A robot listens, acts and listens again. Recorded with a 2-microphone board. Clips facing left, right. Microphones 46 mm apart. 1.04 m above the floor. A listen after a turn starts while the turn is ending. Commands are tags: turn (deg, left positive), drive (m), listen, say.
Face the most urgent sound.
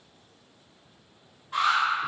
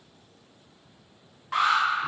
<turn deg="-90"/>
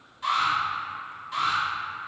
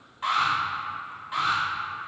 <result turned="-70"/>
<turn deg="-20"/>
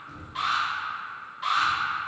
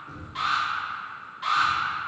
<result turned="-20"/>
<say>Facing the alarm, 1 to 2 m away.</say>